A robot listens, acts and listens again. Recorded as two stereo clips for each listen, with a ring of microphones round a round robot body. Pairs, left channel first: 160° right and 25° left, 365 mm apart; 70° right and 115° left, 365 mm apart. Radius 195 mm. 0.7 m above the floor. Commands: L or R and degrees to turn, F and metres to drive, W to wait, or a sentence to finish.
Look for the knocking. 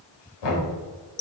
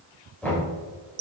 R155
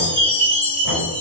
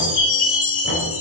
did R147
W
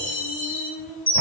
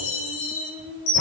W
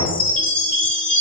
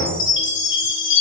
Facing the knocking.